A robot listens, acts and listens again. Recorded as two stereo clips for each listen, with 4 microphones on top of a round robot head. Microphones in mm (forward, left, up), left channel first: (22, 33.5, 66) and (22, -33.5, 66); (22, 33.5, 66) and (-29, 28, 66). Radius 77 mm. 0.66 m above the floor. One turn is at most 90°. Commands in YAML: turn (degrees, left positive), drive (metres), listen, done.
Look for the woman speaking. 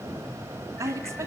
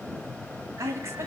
turn: -90
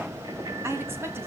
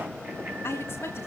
turn: -35
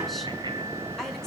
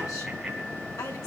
listen: true
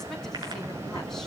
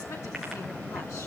listen: true
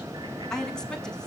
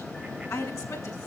turn: 10
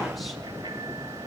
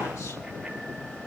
listen: true
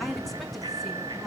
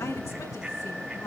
listen: true
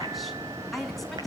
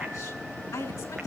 done: "Found it: a woman speaking, straight ahead."